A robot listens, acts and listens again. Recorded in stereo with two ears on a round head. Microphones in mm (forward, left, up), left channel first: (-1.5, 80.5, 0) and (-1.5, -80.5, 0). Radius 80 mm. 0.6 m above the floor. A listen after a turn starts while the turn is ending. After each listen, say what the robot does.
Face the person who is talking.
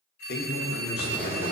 Turn 60° left.
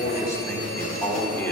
Turn 15° left.
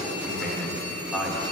Facing the man speaking.